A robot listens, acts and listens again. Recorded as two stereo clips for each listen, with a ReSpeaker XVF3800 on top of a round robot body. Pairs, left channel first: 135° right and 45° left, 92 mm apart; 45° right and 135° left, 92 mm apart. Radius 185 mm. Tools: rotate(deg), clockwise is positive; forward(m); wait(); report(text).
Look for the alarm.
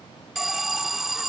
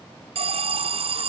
rotate(-135)
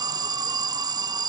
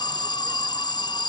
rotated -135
report("Found it: an alarm, straight ahead.")